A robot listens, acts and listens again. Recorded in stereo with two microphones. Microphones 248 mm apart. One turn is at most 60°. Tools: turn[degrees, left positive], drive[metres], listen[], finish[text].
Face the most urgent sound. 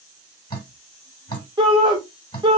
Thought: The shout: about 15° right or 165° right.
Action: turn[-15]
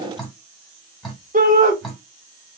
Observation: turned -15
Thought: So it is at 150° right.
Action: turn[-60]
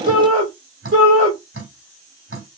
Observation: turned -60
Thought: The shout is now 90° right.
Action: turn[-60]
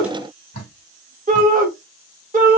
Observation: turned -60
Thought: The shout is now 35° right.
Action: turn[-35]
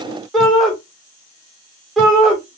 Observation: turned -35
Action: finish[Found it: a shout, straight ahead.]